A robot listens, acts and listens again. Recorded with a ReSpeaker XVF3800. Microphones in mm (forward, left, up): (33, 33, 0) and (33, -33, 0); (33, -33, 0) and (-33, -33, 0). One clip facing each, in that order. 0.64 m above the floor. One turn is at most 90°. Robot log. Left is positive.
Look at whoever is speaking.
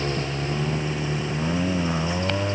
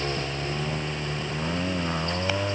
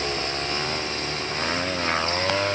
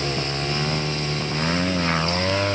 cmd idle
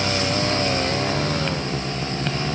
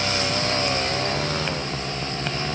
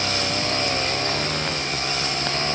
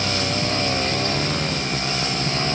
cmd idle
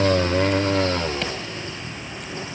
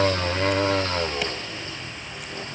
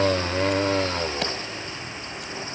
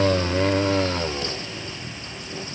end: I can't make out anyone speaking.